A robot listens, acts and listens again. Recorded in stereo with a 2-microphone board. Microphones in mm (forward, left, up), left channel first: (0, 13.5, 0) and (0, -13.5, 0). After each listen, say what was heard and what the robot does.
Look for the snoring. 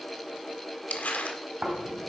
Turn 90° right.
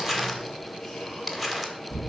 Facing the snoring, 2 to 4 m away.